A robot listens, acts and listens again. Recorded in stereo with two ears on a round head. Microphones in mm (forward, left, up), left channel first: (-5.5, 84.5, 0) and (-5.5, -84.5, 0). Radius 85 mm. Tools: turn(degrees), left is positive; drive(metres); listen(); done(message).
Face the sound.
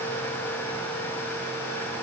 listen()
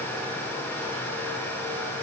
listen()
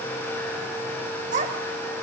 turn(degrees=-40)
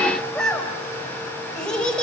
done("Found it: a child speaking, straight ahead.")